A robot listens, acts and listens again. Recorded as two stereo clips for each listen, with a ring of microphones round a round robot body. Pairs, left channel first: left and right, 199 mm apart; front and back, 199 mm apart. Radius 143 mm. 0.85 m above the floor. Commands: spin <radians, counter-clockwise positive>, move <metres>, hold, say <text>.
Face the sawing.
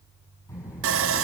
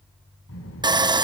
spin -1.92
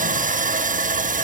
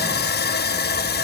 spin -0.70
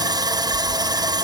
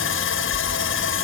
spin -0.35
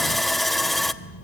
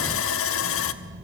say Found it: sawing, straight ahead.